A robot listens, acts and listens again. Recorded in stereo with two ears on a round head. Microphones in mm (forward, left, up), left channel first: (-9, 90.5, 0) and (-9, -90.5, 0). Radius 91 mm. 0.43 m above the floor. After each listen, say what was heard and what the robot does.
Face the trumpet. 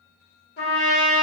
The trumpet: about 50° left or 130° left. Turn 50° left.
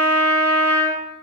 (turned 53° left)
So it is at 10° left. Turn 10° left.
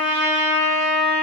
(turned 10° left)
Facing the trumpet.